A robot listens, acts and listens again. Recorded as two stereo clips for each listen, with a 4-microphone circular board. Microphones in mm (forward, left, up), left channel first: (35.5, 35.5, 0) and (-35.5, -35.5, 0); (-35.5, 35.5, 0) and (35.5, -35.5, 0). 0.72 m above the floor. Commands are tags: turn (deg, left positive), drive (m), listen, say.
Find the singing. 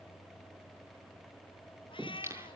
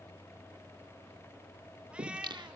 <turn deg="-75"/>
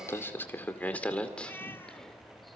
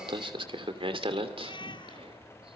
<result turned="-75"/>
<turn deg="-35"/>
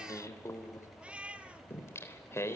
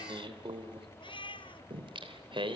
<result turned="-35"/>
<turn deg="-15"/>
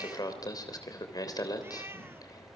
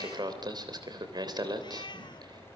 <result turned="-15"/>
<say>Facing the singing, 2 to 4 m away.</say>